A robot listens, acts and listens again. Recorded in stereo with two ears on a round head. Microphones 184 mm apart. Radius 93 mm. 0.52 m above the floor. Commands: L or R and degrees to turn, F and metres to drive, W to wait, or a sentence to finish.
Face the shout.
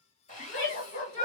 L60
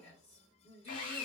L35
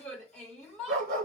Found it: a shout, straight ahead, 1 to 2 m away.